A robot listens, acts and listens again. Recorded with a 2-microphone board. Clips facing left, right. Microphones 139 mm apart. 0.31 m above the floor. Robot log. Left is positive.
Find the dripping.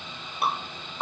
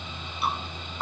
note: The dripping: about 55° left or 125° left.
cmd yaw +55
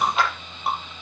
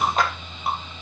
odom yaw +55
end: Facing the dripping.